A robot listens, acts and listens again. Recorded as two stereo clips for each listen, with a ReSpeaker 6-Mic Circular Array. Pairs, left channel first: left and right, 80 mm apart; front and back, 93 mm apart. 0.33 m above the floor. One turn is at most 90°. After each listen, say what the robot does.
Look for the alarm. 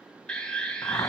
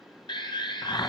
Turn 15° left.
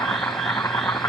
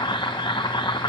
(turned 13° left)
Keep listening.
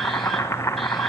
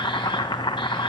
Keep listening.
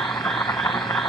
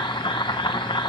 Facing where the alarm came from. I can't hear it now.